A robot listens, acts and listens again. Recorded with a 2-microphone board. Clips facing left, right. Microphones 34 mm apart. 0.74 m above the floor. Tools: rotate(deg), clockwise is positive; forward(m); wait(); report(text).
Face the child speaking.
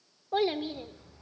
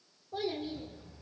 rotate(-75)
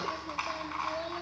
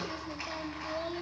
report("Facing the child speaking, 2 to 4 m away.")